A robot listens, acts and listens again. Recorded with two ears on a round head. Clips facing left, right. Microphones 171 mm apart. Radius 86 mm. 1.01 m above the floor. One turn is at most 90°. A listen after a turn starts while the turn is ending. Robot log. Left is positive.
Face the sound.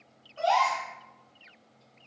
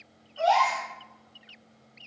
note: The gasp: about 50° left or 130° left.
cmd yaw +50
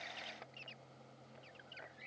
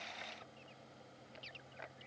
cmd idle
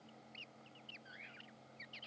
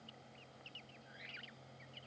end: I heard a gasp, but can't make it out now. It was about straight ahead or 80° left.